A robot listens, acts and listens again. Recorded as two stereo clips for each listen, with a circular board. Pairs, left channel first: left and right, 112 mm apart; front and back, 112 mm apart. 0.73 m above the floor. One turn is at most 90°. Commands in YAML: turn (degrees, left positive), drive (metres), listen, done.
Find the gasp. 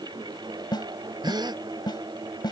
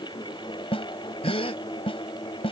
turn: -40
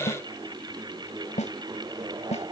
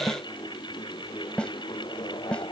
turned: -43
done: "Facing where the gasp came from. I can't hear it now."